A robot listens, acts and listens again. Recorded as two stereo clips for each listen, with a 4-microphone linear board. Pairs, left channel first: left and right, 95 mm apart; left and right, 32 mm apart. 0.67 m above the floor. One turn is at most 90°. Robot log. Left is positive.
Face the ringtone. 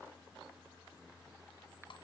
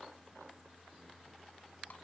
cmd idle
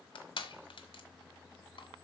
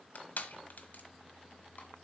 cmd idle
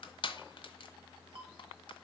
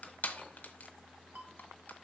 cmd yaw -90
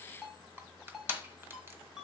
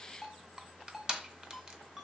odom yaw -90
end: Found it: a ringtone, straight ahead.